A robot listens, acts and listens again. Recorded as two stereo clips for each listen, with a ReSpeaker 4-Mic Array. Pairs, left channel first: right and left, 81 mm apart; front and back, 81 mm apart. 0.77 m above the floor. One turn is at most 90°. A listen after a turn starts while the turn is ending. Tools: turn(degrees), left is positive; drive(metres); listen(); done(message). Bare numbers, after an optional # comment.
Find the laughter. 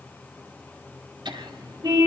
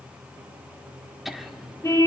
# The laughter: 90° left.
turn(90)
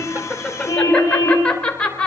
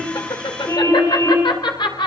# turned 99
# The laughter is now 15° right.
turn(-15)
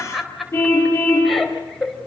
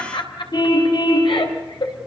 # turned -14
done("Found it: laughter, straight ahead, over 4 m away.")